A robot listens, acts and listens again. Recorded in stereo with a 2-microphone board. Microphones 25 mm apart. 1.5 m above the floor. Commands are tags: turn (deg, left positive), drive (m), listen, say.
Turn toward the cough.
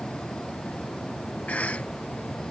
<turn deg="75"/>
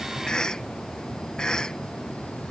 <turn deg="35"/>
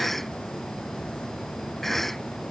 <turn deg="10"/>
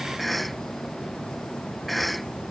<say>Found it: a cough, straight ahead.</say>